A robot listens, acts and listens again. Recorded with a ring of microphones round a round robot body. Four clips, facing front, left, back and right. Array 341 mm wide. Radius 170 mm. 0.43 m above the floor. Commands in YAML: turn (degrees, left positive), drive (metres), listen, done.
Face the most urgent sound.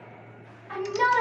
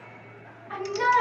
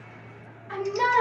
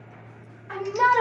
turn: -105
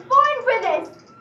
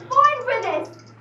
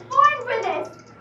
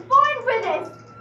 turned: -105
turn: -25
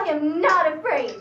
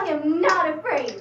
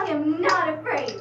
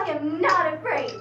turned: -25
done: "Found it: a shout, straight ahead, 1 to 2 m away."